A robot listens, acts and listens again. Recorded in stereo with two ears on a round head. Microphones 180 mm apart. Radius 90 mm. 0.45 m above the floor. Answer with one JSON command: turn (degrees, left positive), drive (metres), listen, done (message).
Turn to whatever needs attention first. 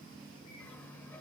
{"listen": true}
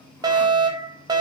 {"turn": -20}
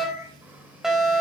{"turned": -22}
{"done": "Found it: a fire alarm, straight ahead, 2 to 4 m away."}